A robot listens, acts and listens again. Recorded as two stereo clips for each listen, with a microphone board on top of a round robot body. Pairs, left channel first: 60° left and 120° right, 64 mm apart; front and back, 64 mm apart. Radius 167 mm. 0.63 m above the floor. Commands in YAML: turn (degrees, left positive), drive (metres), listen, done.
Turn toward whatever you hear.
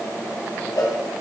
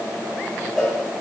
turn: 90
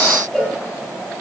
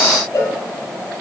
turn: -20
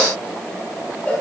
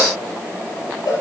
done: "Found it: a cowbell, straight ahead, 2 to 4 m away."